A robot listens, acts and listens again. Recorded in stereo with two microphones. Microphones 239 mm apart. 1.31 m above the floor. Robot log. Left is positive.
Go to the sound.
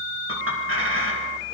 cmd yaw -90
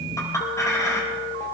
note: So it is at 15° left.
cmd yaw +15
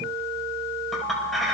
cmd fwd 1.0
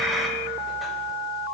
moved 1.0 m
cmd fwd 1.0
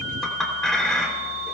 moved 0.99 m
cmd fwd 1.0
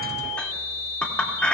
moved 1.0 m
cmd fwd 1.0
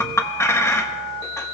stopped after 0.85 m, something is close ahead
note: The clink is now 10° left.
cmd yaw +10
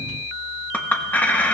end: I am next to the clink.